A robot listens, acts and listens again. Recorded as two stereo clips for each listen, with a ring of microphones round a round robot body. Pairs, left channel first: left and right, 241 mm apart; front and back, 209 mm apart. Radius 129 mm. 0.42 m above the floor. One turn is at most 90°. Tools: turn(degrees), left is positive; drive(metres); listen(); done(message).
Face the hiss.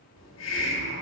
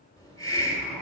turn(degrees=70)
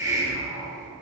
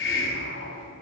turn(degrees=-15)
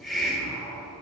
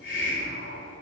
done("Found it: a hiss, straight ahead.")